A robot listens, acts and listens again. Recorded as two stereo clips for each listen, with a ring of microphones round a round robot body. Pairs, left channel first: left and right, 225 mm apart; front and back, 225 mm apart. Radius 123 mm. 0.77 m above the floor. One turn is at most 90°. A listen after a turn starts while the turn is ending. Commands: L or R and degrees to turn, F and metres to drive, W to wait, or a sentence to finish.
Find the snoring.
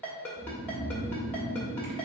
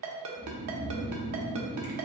L90
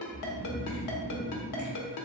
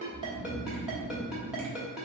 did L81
L60
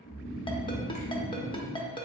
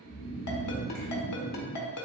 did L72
R10
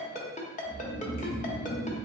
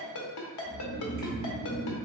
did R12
Facing the snoring, under 1 m away.